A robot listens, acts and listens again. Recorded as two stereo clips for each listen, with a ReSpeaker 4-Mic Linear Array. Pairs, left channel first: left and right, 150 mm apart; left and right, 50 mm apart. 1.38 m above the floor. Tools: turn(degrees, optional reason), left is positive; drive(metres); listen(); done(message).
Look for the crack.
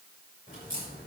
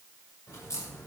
turn(degrees=60, reason="The crack: about 60° left or 120° left.")
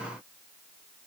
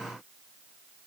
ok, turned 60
listen()
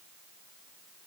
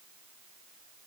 done("I heard a crack, but can't make it out now. It was about straight ahead or 60° left.")